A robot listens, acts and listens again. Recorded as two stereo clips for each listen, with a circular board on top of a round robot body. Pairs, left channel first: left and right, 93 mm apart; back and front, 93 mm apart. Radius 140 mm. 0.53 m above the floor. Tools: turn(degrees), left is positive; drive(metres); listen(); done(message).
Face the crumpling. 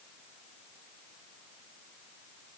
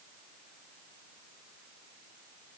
listen()
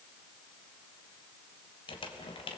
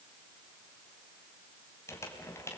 turn(degrees=120)
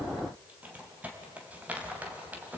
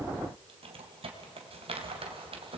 turn(degrees=-15)
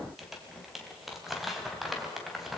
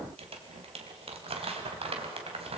done("Found it: crumpling, straight ahead, 2 to 4 m away.")